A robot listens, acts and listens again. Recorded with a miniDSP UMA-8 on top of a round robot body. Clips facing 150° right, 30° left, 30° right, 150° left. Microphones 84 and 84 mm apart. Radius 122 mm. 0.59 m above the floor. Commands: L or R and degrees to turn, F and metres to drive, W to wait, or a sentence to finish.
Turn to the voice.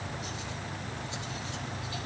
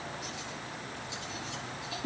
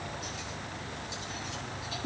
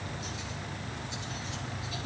W
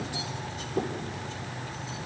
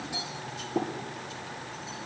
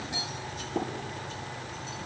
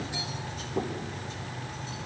W
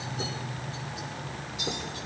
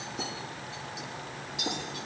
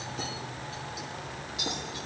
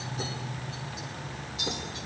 I can't make out anyone speaking to turn to.